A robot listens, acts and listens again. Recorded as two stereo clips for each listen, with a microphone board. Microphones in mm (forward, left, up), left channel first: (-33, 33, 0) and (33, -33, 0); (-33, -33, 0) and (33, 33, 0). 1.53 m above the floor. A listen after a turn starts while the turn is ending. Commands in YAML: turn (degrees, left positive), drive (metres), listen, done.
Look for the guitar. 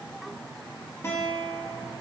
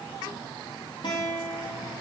turn: -165
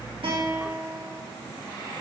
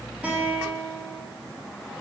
turn: -15
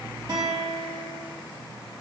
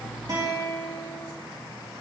done: "Facing the guitar."